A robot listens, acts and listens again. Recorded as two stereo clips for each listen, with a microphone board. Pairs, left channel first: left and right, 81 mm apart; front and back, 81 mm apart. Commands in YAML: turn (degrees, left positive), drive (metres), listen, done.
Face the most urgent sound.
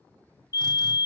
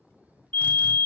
turn: 65
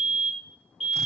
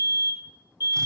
done: "Facing the fire alarm, 2 to 4 m away."